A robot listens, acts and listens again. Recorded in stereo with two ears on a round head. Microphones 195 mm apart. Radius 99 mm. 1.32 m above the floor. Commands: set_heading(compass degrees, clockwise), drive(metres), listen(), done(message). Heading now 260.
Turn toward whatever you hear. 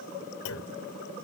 set_heading(185)
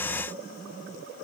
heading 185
listen()
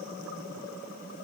done("I heard a clunk, but can't make it out now. It was about straight ahead or 30° left.")